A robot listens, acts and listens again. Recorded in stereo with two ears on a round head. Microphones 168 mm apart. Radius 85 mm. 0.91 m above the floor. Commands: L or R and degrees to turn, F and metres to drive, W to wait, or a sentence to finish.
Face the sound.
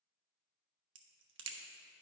R75
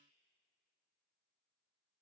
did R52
W
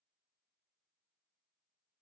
I heard a crack, but can't make it out now. It was about 20° right or 55° right.